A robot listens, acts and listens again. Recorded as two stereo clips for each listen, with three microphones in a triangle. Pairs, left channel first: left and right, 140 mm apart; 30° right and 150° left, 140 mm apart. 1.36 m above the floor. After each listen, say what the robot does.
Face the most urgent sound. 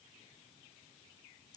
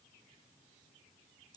Keep listening.
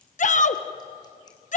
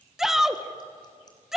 Turn 65° left.
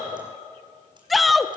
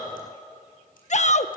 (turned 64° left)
Facing the shout, 1 to 2 m away.